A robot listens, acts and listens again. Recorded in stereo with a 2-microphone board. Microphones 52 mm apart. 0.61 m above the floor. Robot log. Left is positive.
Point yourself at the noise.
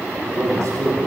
cmd yaw -90
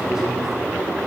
note: So it is at 15° right.
cmd yaw -15
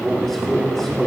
end: Found it: a man speaking, straight ahead.